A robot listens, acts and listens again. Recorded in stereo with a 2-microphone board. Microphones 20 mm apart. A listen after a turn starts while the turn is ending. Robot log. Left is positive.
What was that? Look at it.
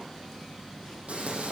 cmd yaw -90
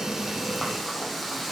end: Found it: frying, straight ahead.